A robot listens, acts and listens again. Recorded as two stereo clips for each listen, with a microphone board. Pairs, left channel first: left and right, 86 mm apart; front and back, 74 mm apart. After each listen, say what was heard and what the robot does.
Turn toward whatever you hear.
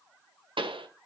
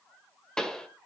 The pop: 80° right. Turn 80° right.
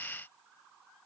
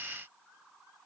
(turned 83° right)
Facing where the pop came from. I can't hear it now.